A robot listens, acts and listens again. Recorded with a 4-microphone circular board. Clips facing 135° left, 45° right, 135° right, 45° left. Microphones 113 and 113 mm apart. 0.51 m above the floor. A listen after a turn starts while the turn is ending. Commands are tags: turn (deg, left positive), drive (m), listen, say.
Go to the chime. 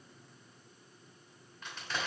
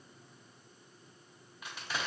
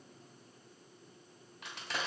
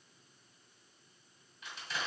<listen/>
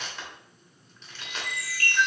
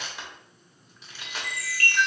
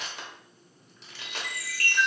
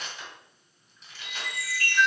<turn deg="-155"/>
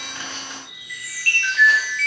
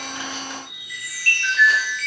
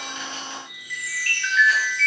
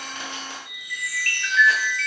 <turn deg="10"/>
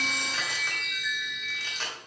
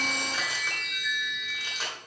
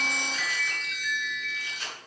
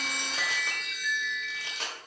<drive m="1.0"/>
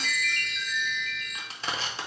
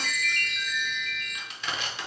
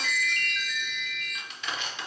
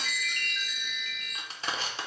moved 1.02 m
<drive m="1.0"/>
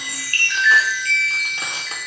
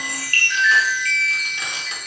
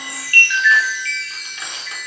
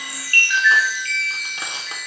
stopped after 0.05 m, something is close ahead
<say>Arrived at the chime, straight ahead.</say>